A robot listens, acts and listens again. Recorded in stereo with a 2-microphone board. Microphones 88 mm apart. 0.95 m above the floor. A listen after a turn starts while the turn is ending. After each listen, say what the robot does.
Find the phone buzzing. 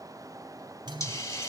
Turn 90° right.
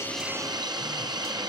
Keep listening.
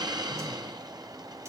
Keep listening.
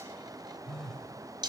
Facing the phone buzzing.